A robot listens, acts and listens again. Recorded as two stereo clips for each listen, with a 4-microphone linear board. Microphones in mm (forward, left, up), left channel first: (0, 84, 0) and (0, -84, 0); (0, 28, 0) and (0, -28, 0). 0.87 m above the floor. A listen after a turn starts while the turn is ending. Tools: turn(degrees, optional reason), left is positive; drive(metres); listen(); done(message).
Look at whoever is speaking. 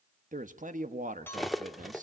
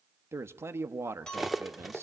turn(degrees=-50, reason="The man speaking: about 50° right or 130° right.")
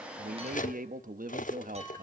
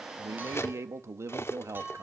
turn(degrees=-70, reason="So it is at 70° right.")
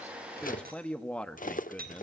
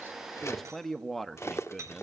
done("Facing the man speaking.")